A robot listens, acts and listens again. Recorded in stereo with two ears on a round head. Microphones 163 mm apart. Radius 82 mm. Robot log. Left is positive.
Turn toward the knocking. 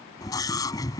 cmd idle
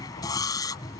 cmd idle
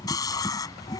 end: I can't make out knocking, only a scream.